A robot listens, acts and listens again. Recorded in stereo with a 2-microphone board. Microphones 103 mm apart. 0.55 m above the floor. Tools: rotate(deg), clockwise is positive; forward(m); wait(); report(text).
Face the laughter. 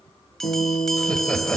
rotate(-30)
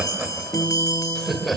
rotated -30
rotate(-30)
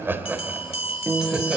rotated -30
report("Found it: laughter, straight ahead, 2 to 4 m away.")